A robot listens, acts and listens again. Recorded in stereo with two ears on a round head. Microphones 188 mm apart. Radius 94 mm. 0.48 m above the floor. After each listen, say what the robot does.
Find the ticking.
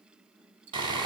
Turn 60° right.
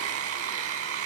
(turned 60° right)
Keep listening.
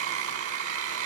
Keep listening.
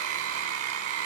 I heard ticking, but can't make it out now. It was about straight ahead or 60° right.